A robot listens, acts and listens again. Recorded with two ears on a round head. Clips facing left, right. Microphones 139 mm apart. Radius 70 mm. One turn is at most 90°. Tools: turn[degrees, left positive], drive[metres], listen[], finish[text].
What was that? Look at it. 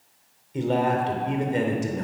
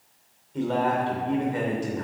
Thought: The man speaking: about 30° left or 150° left.
Action: turn[30]
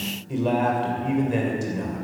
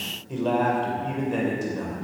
Thought: So it is at 15° left.
Action: turn[15]
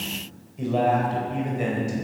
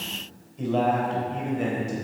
Thought: The man speaking is now 10° left.
Action: turn[10]
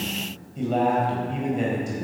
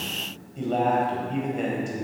Action: finish[Facing the man speaking.]